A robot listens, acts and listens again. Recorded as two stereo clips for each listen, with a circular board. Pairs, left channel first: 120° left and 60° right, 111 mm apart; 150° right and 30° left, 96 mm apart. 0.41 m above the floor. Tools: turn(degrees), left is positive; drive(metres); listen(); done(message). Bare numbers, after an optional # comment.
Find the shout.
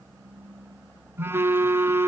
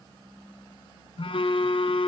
listen()
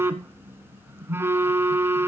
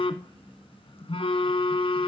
listen()
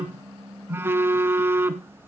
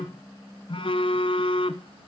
done("I can't make out a shout to turn to.")